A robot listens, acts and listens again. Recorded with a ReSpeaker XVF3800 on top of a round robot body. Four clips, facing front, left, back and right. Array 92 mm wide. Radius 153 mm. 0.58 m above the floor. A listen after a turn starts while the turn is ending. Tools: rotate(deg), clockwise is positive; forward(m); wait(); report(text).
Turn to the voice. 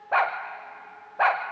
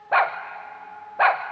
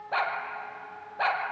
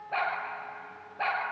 wait()
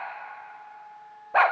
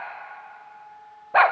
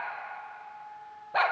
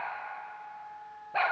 wait()
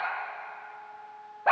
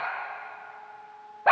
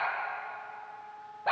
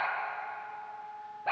report("I can't make out anyone speaking to turn to.")